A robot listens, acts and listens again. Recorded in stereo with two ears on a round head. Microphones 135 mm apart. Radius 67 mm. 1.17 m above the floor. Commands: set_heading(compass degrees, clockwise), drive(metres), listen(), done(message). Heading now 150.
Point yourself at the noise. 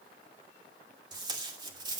set_heading(180)
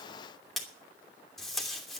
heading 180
done("Found it: tape being pulled, straight ahead, 2 to 4 m away.")